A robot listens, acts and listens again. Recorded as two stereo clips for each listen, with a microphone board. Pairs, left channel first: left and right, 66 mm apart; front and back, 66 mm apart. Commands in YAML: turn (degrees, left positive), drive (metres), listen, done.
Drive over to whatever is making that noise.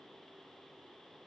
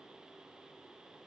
listen: true
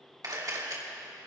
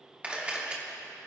turn: -110
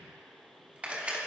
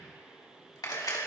turn: -20
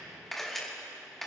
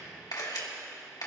drive: 1.0
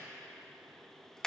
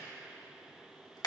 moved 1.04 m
turn: 10
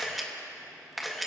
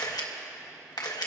drive: 1.0
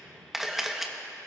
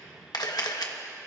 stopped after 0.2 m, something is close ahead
done: "I am next to the camera shutter."